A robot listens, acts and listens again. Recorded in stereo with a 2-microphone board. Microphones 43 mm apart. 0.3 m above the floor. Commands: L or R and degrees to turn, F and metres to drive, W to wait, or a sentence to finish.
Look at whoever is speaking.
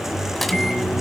W
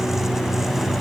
W
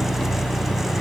I can't make out anyone speaking to turn to.